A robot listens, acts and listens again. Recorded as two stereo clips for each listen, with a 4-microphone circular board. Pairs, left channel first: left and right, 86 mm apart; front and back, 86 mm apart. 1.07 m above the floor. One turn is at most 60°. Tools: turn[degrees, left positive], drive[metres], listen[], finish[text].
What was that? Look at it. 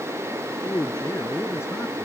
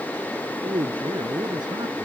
Thought: The man speaking: 145° left.
Action: turn[60]
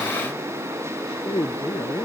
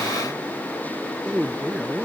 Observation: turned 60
Thought: The man speaking is now 100° left.
Action: turn[60]
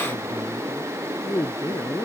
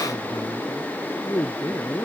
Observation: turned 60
Thought: The man speaking is now 55° left.
Action: turn[55]
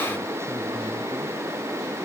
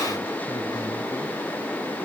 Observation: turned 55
Action: listen[]
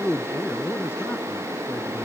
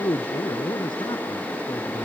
Thought: The man speaking is now 25° left.
Action: turn[25]
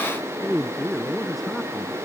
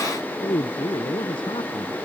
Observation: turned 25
Action: finish[Facing the man speaking.]